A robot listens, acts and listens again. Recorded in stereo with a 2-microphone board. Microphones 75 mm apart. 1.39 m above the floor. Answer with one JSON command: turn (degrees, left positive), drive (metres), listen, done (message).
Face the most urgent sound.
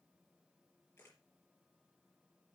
{"listen": true}
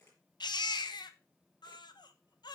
{"turn": 70}
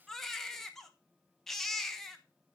{"done": "Facing the baby crying, under 1 m away."}